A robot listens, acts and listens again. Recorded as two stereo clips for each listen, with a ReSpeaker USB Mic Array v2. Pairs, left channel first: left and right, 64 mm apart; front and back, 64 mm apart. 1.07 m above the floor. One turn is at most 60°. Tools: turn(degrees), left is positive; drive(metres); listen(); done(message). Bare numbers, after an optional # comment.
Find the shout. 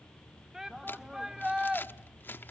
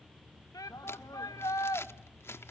# The shout: 10° right.
turn(-10)
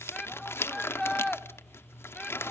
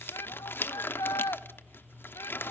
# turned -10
done("Facing the shout, 1 to 2 m away.")